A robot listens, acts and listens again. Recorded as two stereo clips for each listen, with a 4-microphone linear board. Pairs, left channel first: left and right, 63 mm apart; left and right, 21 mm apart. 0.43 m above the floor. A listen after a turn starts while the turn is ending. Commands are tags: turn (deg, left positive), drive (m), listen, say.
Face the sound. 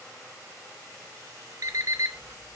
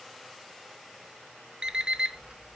<turn deg="-60"/>
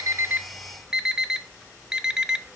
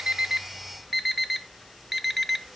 <turn deg="-10"/>
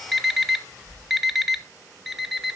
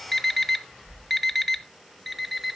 <say>Facing the alarm clock, under 1 m away.</say>